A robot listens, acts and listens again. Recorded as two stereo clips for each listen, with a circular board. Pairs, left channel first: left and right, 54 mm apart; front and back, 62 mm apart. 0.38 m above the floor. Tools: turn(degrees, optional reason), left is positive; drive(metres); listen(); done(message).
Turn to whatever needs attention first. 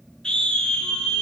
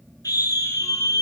turn(degrees=15, reason="The scream: 15° left.")
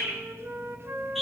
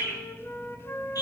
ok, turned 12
done("Found it: a scream, straight ahead, over 4 m away.")